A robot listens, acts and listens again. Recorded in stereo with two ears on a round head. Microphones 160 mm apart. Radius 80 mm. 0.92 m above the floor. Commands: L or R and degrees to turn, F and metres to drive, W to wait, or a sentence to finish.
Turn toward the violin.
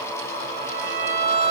R55
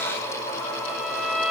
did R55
Found it: a violin, straight ahead.